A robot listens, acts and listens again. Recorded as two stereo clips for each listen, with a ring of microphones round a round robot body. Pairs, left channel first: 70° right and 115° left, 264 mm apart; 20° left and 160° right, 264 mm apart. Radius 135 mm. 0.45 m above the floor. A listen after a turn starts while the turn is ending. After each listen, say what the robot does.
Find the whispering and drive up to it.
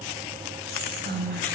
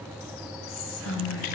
Turn 60° left.
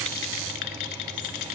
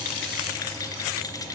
Keep listening.
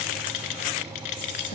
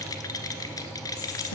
Turn 10° right.
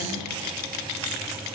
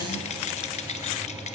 Keep listening.
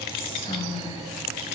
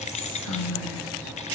Drive 1.0 m forward.
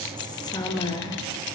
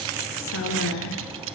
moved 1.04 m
Drive 1.0 m forward.
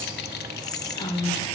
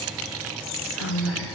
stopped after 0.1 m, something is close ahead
I am next to the whispering.